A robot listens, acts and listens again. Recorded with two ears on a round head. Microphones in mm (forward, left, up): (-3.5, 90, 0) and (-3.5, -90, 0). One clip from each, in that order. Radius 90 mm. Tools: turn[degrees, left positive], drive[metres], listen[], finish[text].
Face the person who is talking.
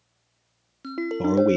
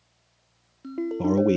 Action: turn[30]
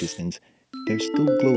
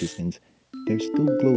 Thought: So it is at 140° left.
Action: turn[140]
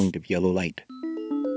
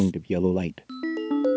Thought: The man speaking is now 50° left.
Action: turn[50]
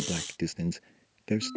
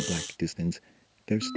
Action: finish[Facing the man speaking.]